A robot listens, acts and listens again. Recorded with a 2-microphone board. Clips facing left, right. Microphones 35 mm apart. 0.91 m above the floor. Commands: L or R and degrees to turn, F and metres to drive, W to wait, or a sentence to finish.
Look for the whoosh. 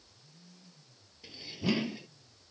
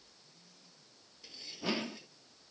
R40
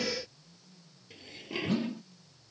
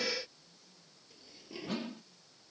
Found it: a whoosh, straight ahead.